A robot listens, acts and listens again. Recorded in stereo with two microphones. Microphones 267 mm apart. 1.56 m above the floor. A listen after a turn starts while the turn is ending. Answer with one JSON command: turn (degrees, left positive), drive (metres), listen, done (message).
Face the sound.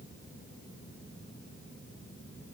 {"listen": true}
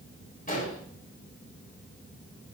{"turn": 30}
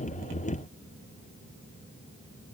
{"listen": true}
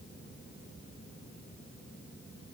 {"done": "I heard an explosion, but can't make it out now. It was about straight ahead or 120° left."}